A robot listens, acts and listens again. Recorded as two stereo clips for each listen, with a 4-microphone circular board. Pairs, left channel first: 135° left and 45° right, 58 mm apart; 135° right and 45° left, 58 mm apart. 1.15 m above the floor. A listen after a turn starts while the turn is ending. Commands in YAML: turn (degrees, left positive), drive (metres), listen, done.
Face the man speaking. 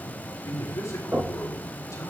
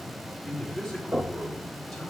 turn: 140
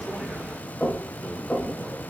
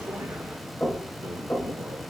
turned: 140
listen: true
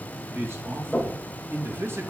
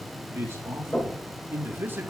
done: "Found it: a man speaking, straight ahead."